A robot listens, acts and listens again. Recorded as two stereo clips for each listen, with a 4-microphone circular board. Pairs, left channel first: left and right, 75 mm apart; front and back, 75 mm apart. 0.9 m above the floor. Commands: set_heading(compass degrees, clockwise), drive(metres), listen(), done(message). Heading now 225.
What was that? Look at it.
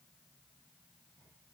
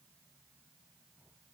listen()
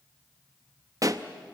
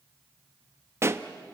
set_heading(355)
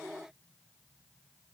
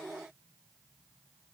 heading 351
done("Facing where the pop came from. I can't hear it now.")